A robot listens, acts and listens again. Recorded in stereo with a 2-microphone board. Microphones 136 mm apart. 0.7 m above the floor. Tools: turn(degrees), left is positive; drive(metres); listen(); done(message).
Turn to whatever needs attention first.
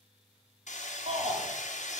turn(degrees=-55)
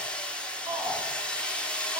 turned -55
turn(degrees=-30)
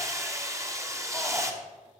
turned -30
listen()
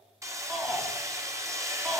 done("Found it: a shout, straight ahead, 1 to 2 m away.")